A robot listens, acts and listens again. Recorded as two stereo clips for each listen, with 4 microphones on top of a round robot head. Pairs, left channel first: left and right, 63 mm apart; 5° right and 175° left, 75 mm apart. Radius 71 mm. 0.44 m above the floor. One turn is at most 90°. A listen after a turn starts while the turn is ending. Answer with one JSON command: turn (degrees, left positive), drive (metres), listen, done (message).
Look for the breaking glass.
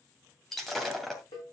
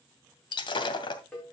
{"done": "Found it: breaking glass, straight ahead, 2 to 4 m away."}